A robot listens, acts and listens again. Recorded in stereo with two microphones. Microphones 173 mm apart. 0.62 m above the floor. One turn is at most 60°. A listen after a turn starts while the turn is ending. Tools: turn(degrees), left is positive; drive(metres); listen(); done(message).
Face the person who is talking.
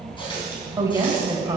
turn(degrees=-20)
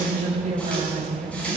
turn(degrees=-60)
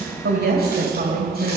turn(degrees=-60)
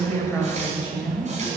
done("Found it: a woman speaking, straight ahead, 2 to 4 m away.")